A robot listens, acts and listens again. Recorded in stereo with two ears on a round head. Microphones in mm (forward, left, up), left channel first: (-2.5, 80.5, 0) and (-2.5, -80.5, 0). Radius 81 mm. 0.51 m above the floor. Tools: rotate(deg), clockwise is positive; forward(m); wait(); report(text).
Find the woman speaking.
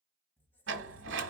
wait()
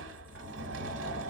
wait()
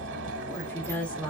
rotate(-30)
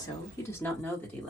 rotate(-30)
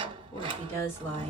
rotate(-30)
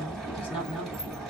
rotate(-150)
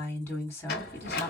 rotate(-15)
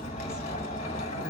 wait()
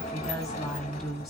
report("Facing the woman speaking.")